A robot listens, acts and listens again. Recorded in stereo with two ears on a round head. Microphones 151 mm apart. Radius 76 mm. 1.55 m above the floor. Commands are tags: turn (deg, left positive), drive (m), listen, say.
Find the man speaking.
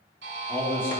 <turn deg="15"/>
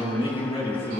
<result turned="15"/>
<turn deg="150"/>
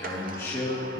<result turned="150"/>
<turn deg="15"/>
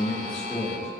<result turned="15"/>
<say>Found it: a man speaking, straight ahead, 2 to 4 m away.</say>